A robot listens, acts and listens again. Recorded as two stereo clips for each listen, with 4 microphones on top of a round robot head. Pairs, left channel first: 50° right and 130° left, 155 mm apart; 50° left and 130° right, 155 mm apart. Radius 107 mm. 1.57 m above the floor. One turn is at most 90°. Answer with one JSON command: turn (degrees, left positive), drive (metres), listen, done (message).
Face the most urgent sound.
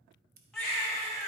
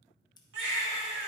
{"turn": -90}
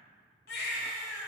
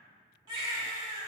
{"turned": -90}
{"turn": -70}
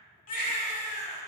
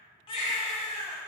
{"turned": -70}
{"turn": -10}
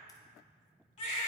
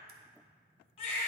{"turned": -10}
{"done": "Facing the baby crying."}